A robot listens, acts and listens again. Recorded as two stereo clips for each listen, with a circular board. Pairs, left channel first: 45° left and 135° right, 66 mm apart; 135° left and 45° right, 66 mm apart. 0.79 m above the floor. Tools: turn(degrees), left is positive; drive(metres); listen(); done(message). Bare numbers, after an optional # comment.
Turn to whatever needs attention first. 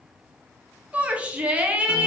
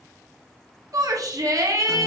# The shout: 65° right.
turn(-65)
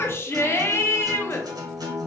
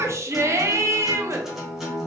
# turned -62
done("Facing the shout, under 1 m away.")